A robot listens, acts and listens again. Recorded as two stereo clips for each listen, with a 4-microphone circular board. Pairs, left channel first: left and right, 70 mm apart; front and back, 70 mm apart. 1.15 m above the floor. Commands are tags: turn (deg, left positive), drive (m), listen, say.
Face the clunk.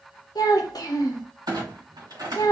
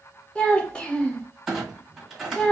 <turn deg="-95"/>
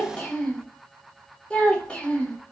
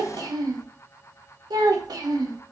<say>I heard a clunk from this way, but can't make it out now.</say>